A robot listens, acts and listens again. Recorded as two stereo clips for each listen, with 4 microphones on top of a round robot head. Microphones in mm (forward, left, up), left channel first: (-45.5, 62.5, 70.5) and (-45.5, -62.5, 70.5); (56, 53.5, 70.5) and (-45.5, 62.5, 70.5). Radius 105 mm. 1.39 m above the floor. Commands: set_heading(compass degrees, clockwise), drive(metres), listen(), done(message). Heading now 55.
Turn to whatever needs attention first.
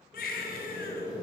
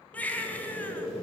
set_heading(345)
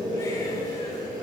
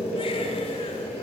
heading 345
listen()
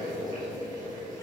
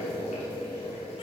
listen()
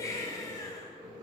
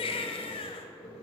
set_heading(325)
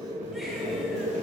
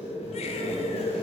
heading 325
listen()
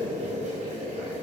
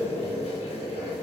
listen()
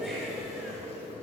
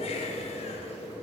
done("Facing where the baby crying came from. I can't hear it now.")